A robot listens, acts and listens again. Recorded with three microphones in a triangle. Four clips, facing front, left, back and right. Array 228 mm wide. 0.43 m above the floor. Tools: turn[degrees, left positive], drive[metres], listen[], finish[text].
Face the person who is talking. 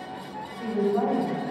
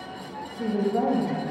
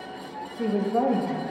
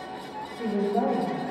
Thought: The woman speaking: 175° right.
Action: turn[-175]
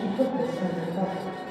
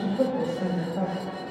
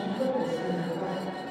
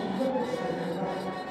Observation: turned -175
Thought: The woman speaking is now 40° left.
Action: turn[40]
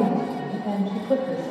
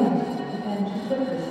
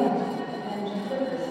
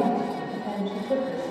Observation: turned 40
Action: finish[Found it: a woman speaking, straight ahead, 2 to 4 m away.]